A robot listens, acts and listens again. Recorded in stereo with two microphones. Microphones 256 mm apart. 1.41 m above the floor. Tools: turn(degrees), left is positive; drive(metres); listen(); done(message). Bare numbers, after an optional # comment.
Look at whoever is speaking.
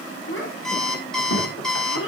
# The child speaking: about 55° left or 125° left.
turn(55)
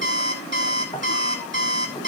listen()
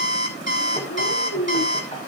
# So it is at 75° left.
turn(75)
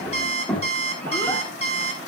done("Found it: a child speaking, straight ahead, 2 to 4 m away.")